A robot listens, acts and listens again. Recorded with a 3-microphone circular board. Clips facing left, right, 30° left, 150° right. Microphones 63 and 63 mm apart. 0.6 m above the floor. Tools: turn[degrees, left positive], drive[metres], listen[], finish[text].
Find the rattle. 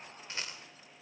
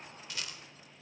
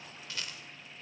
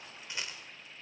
Thought: The rattle: 145° left.
Action: turn[145]
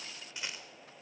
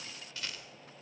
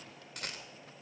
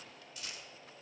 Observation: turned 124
Thought: The rattle is now 20° left.
Action: turn[20]
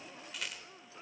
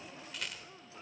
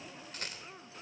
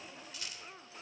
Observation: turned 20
Action: finish[Found it: a rattle, straight ahead.]